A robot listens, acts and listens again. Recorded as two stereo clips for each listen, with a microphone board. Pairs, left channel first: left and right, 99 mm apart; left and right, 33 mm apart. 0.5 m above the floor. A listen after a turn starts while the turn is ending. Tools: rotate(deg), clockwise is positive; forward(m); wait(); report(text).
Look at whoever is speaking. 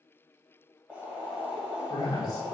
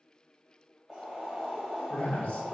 rotate(-45)
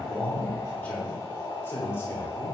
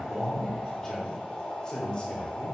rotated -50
rotate(-25)
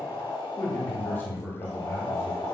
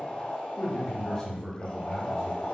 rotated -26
rotate(-30)
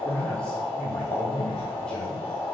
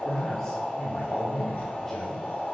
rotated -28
rotate(-10)
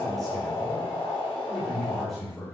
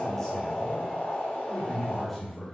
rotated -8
report("Facing the man speaking, 1 to 2 m away.")